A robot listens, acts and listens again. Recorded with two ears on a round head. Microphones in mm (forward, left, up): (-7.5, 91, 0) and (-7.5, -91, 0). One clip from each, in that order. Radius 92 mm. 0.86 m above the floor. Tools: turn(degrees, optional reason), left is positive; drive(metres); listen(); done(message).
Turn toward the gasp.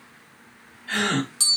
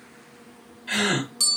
turn(degrees=-40, reason="The gasp: about 40° right or 140° right.")
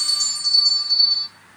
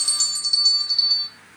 listen()
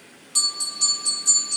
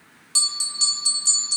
done("I heard a gasp, but can't make it out now. It was about straight ahead or 100° right.")